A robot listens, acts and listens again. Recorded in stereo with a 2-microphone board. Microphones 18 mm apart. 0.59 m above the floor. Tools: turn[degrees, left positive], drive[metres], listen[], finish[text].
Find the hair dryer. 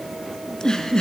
Action: listen[]
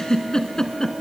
Action: listen[]
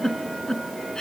Action: finish[I can't make out a hair dryer, only a giggle.]